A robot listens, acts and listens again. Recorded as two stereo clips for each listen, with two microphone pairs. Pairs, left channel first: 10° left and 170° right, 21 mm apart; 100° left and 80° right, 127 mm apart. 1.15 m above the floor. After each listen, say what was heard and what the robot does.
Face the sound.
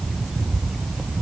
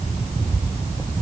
Keep listening.
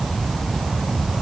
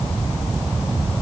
Keep listening.
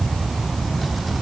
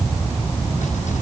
I can't make out anything to turn to.